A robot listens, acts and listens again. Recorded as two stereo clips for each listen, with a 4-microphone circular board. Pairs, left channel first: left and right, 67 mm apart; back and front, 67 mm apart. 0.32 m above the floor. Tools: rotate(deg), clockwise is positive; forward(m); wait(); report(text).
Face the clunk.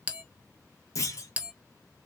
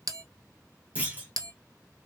rotate(-65)
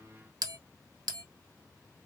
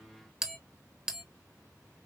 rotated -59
report("Facing where the clunk came from. I can't hear it now.")